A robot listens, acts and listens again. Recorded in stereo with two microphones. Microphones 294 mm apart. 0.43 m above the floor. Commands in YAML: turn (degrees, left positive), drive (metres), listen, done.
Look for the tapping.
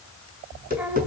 turn: -30
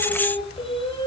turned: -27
listen: true
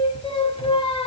listen: true
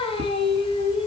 done: "I heard tapping, but can't make it out now. It was about straight ahead or 125° right."